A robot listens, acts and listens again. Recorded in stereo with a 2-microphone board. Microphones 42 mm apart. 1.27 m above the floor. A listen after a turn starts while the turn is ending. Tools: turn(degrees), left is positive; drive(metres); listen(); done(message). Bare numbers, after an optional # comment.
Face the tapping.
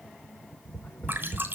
# The tapping: about 35° left or 145° left.
turn(35)
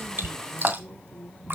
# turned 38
# So it is at 105° left.
turn(105)
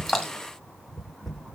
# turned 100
done("Facing the tapping.")